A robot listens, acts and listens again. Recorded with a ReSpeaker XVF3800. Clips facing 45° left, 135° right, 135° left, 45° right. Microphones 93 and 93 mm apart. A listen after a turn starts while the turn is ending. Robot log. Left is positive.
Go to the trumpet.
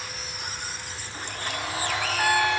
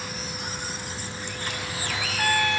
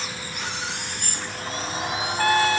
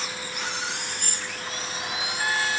note: The trumpet: 125° left.
cmd yaw +125
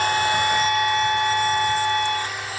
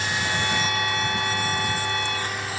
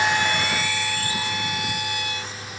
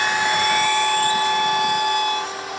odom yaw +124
cmd fwd 1.0
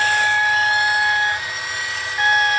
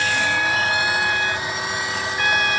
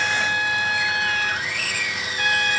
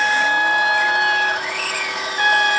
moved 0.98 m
cmd fwd 1.0
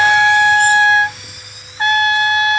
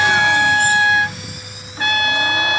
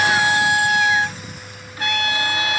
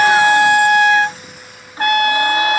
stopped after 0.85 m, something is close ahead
note: The trumpet is now 10° right.
cmd yaw -10
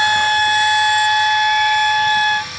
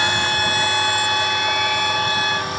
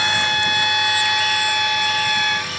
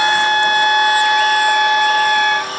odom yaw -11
end: I am next to the trumpet.